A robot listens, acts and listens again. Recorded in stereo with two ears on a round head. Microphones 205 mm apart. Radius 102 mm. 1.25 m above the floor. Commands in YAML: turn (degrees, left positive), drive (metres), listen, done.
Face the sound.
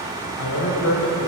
turn: 65
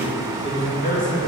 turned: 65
turn: 35
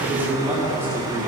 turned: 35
turn: -10
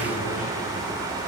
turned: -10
listen: true
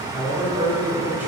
turn: -10
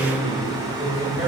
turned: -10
done: "Found it: a man speaking, straight ahead, over 4 m away."